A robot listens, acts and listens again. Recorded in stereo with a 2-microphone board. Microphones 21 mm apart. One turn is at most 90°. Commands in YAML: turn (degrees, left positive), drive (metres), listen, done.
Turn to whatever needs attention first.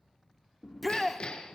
turn: 30
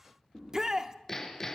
turn: -25
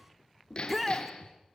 done: "Found it: a shout, straight ahead."